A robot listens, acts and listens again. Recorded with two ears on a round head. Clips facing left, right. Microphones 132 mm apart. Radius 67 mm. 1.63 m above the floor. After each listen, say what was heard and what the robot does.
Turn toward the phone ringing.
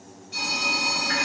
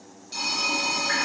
The phone ringing: about 45° right or 135° right. Turn 45° right.
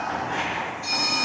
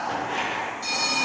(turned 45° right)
So it is at 85° right. Turn 85° right.
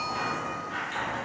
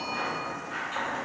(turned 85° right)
Keep listening.
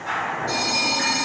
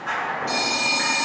The phone ringing is now 25° right. Turn 25° right.
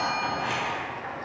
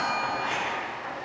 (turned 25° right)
Keep listening.
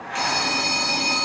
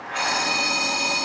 Facing the phone ringing.